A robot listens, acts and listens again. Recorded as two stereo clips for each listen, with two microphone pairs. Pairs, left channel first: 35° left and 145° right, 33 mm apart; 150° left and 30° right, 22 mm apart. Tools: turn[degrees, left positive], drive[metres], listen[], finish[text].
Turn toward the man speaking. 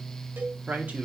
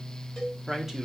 Thought: The man speaking: 110° right.
Action: turn[-110]
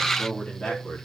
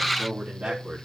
Thought: The man speaking is now 25° right.
Action: turn[-25]
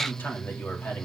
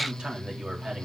Thought: The man speaking is now 15° left.
Action: turn[15]
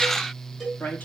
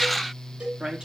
Action: finish[Found it: a man speaking, straight ahead.]